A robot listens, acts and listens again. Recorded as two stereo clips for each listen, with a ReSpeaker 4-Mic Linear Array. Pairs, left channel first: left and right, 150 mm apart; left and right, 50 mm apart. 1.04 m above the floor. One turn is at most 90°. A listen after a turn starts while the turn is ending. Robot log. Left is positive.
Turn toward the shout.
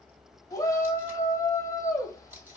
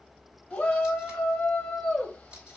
note: The shout: about 20° left or 160° left.
cmd yaw +20
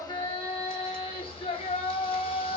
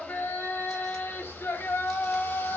note: So it is at 135° left.
cmd yaw +90
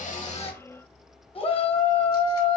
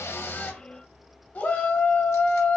note: The shout is now 45° left.
cmd yaw +45
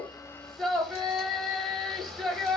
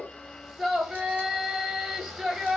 end: Found it: a shout, straight ahead, 1 to 2 m away.